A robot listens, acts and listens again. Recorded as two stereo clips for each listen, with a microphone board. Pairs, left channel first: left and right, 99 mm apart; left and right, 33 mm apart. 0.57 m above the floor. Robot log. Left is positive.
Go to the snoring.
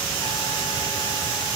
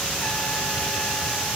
cmd idle
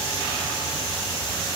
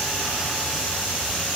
cmd idle
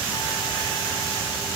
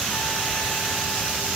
end: I can't make out snoring to turn to.